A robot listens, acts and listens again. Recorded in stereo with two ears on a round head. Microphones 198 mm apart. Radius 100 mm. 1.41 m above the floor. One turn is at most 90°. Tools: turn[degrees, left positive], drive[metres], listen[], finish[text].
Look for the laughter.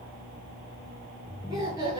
Thought: The laughter: about 20° right or 160° right.
Action: turn[-20]
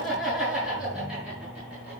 Action: turn[-30]
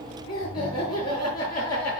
Thought: So it is at 20° left.
Action: turn[20]
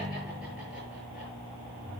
Action: listen[]
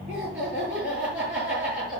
Action: finish[Facing the laughter.]